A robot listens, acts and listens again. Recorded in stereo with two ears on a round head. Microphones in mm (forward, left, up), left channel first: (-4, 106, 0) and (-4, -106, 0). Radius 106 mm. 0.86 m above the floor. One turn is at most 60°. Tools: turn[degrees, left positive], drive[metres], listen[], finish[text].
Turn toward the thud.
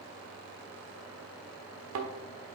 Thought: The thud: about 60° right or 120° right.
Action: turn[-60]
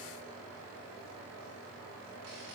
Action: listen[]
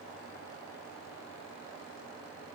Action: finish[I heard a thud, but can't make it out now. It was about straight ahead or 60° right.]